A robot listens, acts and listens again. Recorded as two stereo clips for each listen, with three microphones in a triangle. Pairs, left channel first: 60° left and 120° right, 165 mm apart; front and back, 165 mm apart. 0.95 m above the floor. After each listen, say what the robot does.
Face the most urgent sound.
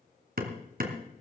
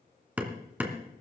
Keep listening.
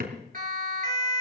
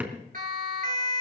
Turn 150° right.
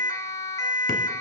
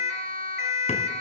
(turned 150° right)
Found it: a siren, straight ahead, 2 to 4 m away.